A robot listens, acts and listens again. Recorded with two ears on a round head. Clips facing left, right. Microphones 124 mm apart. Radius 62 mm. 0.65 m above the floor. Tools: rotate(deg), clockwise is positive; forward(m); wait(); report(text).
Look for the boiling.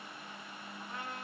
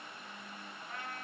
wait()
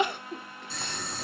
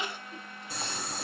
rotate(30)
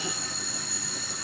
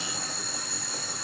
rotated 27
rotate(140)
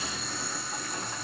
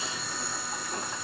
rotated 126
rotate(10)
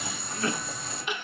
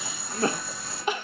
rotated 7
report("Facing the boiling.")